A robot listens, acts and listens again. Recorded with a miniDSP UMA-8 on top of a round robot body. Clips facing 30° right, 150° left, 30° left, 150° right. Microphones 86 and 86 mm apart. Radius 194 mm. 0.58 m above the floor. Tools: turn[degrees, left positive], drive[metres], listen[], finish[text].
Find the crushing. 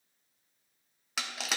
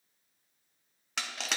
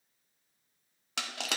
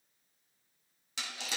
Thought: The crushing: 55° left.
Action: turn[55]
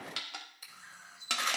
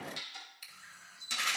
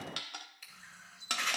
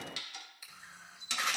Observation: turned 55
Action: finish[Found it: crushing, straight ahead, under 1 m away.]